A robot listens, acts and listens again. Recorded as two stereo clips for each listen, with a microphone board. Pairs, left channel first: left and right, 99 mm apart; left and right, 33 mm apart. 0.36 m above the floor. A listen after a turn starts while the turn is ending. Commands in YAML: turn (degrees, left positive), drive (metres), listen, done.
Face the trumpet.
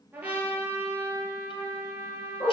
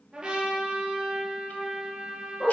turn: -15
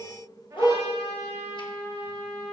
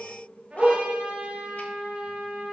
turn: -150
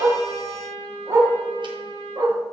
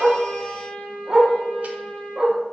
turn: 30
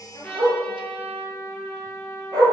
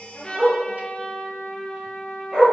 turn: 15
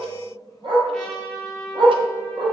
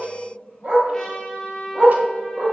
done: "Found it: a trumpet, straight ahead, 2 to 4 m away."